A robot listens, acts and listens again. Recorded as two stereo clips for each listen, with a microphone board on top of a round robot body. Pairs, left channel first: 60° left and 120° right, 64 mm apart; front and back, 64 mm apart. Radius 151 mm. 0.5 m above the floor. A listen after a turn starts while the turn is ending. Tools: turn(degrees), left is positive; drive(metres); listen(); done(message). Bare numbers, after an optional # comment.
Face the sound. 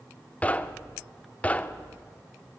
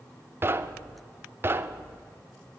# The knocking: 130° left.
turn(130)
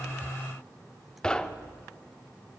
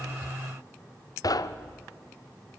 # The knocking is now 20° right.
turn(-20)
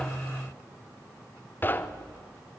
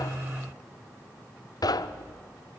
done("Found it: knocking, straight ahead, under 1 m away.")